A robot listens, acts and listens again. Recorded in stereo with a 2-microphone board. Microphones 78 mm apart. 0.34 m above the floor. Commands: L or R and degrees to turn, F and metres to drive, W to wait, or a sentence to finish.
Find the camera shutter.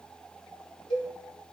W
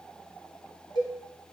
W
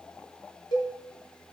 I can't make out a camera shutter to turn to.